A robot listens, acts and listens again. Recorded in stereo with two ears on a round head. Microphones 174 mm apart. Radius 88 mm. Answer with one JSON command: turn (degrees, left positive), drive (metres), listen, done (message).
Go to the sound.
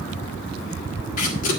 {"turn": 40}
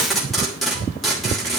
{"drive": 1.0}
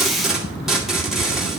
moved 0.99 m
{"drive": 1.0}
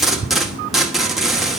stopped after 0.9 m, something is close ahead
{"done": "Arrived at the tape being pulled, straight ahead."}